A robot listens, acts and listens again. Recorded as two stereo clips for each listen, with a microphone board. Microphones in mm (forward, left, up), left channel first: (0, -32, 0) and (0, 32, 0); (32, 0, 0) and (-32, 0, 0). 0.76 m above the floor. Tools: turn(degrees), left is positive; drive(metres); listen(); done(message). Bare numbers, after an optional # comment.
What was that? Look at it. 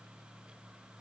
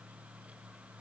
listen()
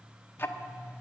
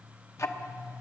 # The ticking: 35° right.
turn(-35)
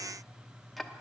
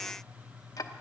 done("Facing the ticking.")